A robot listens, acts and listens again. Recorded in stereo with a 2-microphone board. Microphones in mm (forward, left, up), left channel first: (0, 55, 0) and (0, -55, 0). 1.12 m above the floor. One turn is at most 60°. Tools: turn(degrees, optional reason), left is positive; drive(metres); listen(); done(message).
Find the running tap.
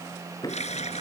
turn(degrees=60)
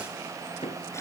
turn(degrees=30, reason="Nothing new. It was at 30° left.")
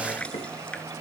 turn(degrees=10, reason="The running tap is now 10° left.")
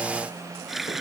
done("Found it: a running tap, straight ahead.")